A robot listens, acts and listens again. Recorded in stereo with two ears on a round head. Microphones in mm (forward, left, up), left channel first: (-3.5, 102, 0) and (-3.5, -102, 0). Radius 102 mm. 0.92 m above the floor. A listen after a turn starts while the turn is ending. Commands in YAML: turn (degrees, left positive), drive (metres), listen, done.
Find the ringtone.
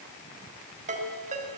turn: -35
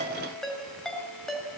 done: "Facing the ringtone."